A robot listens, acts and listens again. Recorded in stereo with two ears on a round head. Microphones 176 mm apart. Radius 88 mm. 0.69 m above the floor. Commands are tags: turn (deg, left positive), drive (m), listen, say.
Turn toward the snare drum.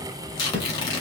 <turn deg="-30"/>
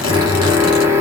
<listen/>
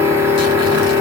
<listen/>
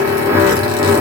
<say>I heard a snare drum, but can't make it out now. It was about 20° left or 140° right.</say>